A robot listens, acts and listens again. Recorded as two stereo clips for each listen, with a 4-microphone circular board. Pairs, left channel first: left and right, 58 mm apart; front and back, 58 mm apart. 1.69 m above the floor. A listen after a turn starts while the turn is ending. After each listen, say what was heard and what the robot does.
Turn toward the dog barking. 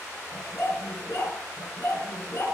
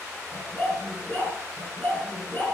The dog barking: 55° left. Turn 55° left.
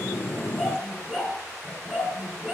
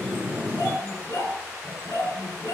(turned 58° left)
The dog barking is now 10° right. Turn 10° right.
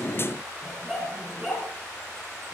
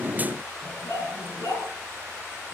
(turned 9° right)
Facing the dog barking, over 4 m away.